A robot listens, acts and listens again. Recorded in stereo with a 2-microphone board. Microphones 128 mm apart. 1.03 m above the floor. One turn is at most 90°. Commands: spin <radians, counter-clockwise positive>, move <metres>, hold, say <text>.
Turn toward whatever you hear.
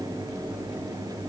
hold
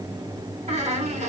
spin -1.13
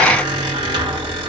spin -0.79
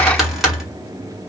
say Found it: a squeak, straight ahead, 1 to 2 m away.